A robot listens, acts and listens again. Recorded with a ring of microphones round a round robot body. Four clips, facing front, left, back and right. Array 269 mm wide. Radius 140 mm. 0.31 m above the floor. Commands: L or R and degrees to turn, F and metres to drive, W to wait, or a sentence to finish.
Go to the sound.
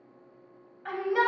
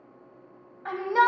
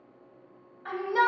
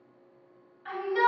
L85
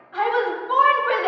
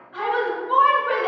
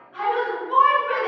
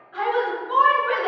F1.0
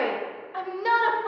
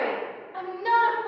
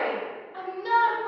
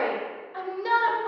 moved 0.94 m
F1.0
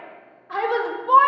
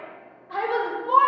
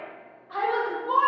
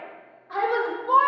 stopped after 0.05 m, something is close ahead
I am next to the shout.